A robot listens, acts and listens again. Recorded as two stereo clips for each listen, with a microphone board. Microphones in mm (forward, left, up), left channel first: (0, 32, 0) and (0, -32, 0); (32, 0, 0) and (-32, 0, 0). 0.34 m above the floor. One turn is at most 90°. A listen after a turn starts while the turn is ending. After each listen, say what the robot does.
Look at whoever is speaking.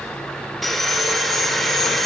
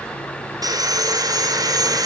Keep listening.
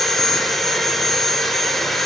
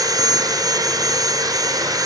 Keep listening.
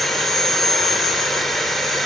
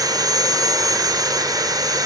I can't make out anyone speaking to turn to.